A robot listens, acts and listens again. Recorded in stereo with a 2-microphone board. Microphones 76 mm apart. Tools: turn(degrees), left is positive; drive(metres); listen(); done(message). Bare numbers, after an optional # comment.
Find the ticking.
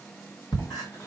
# The ticking: about 65° left or 115° left.
turn(65)
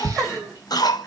# So it is at 20° left.
turn(20)
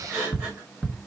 done("Facing the ticking, 1 to 2 m away.")